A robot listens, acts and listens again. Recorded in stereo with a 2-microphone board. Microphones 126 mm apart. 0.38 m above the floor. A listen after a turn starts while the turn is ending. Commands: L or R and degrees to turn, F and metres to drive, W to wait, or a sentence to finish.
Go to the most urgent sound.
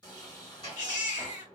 L70
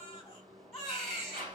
L10
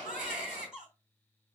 F1.0
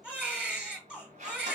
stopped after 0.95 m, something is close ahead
R10
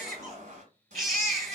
I am next to the baby crying.